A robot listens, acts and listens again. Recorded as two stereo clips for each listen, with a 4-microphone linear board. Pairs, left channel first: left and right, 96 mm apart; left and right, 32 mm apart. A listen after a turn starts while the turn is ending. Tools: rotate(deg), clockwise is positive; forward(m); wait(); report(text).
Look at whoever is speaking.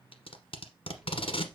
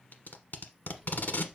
rotate(30)
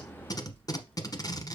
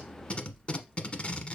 rotate(-20)
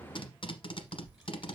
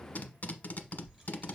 report("Facing the child speaking, 2 to 4 m away.")